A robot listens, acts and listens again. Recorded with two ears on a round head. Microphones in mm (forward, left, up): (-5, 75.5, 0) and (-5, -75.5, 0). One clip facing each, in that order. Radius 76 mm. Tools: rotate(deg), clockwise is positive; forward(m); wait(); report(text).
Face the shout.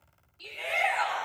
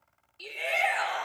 rotate(30)
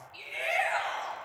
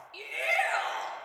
rotate(115)
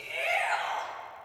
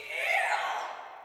rotate(10)
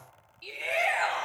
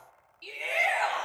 report("Facing the shout.")